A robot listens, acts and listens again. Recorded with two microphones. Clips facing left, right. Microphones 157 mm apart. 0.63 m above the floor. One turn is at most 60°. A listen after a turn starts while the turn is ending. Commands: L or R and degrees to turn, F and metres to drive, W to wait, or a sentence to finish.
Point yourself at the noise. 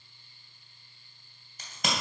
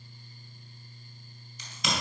L50
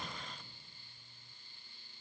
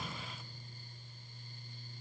W
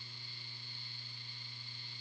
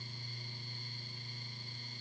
I heard a crack, but can't make it out now. It was about straight ahead or 80° left.